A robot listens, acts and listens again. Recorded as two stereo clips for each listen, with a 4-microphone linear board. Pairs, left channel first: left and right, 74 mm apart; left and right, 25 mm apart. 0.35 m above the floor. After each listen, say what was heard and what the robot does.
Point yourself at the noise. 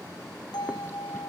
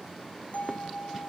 Turn 90° left.
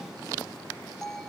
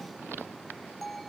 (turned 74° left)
Found it: a bell, straight ahead, 1 to 2 m away.